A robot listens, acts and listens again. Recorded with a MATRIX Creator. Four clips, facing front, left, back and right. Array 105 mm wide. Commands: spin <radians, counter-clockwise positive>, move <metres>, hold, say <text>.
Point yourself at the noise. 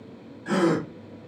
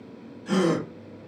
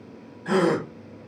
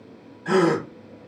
spin -2.01
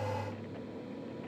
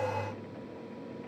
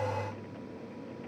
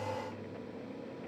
say Facing where the gasp came from. I can't hear it now.